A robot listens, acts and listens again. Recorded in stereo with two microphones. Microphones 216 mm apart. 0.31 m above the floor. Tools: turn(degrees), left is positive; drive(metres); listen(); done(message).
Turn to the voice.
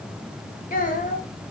turn(degrees=40)
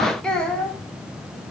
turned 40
done("Facing the child speaking.")